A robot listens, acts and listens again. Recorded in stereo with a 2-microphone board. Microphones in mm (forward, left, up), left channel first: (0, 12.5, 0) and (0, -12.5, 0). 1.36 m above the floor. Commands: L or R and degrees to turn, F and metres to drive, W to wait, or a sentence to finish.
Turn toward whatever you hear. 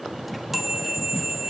R30
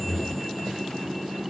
W
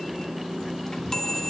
L25
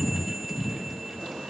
W
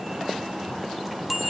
Facing the chime, 2 to 4 m away.